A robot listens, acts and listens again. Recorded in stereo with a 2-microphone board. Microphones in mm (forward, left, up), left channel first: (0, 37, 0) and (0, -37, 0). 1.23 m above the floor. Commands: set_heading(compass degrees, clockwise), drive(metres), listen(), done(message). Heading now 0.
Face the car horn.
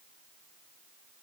listen()
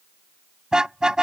set_heading(30)
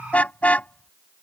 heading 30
set_heading(10)
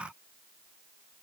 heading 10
listen()
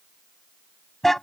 done("Facing the car horn.")